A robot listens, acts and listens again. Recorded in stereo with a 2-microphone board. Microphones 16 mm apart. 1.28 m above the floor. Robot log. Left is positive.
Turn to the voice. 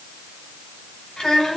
note: The child speaking: about 65° left or 115° left.
cmd yaw +65
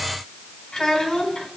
note: So it is at 50° left.
cmd yaw +50
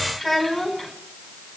note: The child speaking is now 10° left.
cmd yaw +10
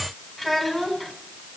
end: Found it: a child speaking, straight ahead.